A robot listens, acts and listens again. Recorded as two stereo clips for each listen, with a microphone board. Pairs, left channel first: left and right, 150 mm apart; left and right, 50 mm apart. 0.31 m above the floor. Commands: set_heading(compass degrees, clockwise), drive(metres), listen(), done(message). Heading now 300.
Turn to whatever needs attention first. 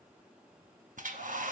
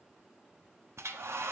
listen()
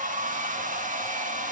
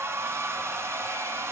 listen()
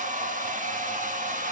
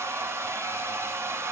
done("I can't make out anything urgent, only a hair dryer.")